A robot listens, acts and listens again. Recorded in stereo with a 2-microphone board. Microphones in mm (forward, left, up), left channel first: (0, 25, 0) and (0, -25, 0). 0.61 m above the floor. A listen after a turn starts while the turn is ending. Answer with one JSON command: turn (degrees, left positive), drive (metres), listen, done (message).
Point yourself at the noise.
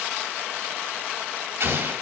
{"turn": -60}
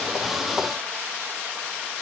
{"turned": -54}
{"listen": true}
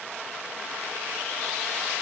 {"done": "I heard an explosion, but can't make it out now. It was about 5° right or 65° right."}